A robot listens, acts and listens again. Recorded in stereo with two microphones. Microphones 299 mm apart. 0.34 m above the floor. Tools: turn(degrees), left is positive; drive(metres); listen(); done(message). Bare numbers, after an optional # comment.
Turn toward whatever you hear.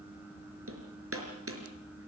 # The hammering: about 45° right or 135° right.
turn(-45)
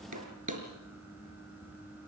# So it is at 85° right.
turn(-85)
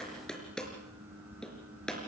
done("Facing the hammering, over 4 m away.")